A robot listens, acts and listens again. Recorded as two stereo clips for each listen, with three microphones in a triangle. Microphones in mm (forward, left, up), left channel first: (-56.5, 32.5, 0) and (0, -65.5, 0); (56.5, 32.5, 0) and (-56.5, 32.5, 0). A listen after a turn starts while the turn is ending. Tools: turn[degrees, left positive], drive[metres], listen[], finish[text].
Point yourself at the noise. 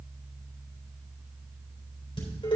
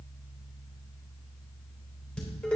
Thought: The dishes clattering: 80° left.
Action: turn[80]
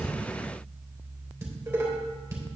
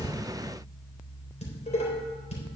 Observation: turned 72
Thought: The dishes clattering is now 10° left.
Action: turn[10]
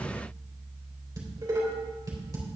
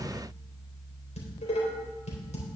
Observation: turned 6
Action: finish[Facing the dishes clattering.]